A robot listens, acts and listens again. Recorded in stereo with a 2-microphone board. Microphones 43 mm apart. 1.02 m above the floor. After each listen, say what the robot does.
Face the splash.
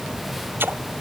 Turn 60° right.
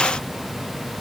Keep listening.
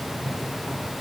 I heard a splash, but can't make it out now. It was about straight ahead or 60° right.